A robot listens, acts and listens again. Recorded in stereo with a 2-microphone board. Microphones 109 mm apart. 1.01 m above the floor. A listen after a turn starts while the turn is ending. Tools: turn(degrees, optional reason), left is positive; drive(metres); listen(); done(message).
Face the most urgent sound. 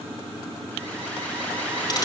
turn(degrees=30)
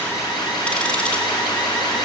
turn(degrees=140, reason="So it is at 140° left.")
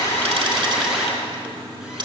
done("Facing the alarm, over 4 m away.")